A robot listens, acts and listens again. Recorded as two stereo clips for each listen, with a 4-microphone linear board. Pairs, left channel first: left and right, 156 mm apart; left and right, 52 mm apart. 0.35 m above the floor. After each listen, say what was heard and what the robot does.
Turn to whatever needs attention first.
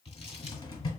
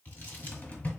Keep listening.
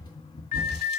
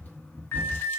The alarm: about 60° left or 120° left. Turn 60° left.
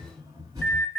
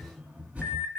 So it is at 15° left. Turn 15° left.
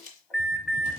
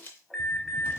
Facing the alarm, 1 to 2 m away.